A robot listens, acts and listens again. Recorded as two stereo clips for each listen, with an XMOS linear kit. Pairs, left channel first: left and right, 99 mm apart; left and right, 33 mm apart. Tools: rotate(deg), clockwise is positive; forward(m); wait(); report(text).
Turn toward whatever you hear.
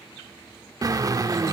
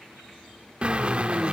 rotate(40)
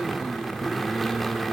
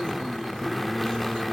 report("Facing the drill.")